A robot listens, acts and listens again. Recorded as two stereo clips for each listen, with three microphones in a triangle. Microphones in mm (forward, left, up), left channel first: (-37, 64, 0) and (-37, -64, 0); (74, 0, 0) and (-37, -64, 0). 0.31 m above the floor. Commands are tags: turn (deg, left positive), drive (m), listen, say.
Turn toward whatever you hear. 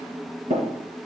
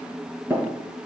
<turn deg="-75"/>
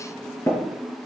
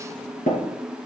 <turn deg="25"/>
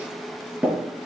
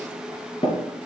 <turn deg="-10"/>
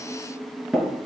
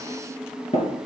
<say>Facing the tapping, 2 to 4 m away.</say>